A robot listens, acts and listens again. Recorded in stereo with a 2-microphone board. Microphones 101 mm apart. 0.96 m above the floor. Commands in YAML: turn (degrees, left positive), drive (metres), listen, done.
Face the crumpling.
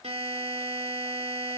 listen: true
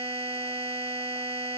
listen: true
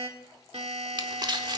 turn: -45
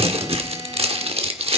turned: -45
turn: -90
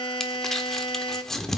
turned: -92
done: "Facing the crumpling, 1 to 2 m away."